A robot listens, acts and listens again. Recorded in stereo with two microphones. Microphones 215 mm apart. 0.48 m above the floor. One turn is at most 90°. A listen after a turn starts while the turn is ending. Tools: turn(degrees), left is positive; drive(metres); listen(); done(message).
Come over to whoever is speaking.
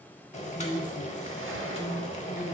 turn(degrees=60)
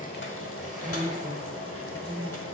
drive(metres=1.0)
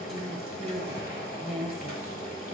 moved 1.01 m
drive(metres=1.0)
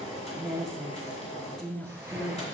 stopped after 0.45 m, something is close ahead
done("I am next to the woman speaking.")